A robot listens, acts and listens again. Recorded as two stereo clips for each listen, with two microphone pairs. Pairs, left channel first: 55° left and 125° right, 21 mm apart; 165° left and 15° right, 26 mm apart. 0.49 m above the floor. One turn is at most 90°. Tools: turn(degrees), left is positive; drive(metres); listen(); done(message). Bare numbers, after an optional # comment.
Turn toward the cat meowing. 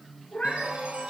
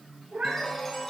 # The cat meowing: 15° left.
turn(15)
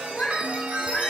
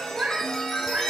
done("Facing the cat meowing, 2 to 4 m away.")